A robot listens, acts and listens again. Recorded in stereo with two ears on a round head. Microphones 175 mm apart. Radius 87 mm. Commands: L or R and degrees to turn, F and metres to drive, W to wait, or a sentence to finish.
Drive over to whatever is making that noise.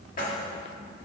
L45
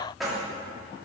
F1.0
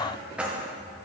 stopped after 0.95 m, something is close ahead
I am next to the keys jangling.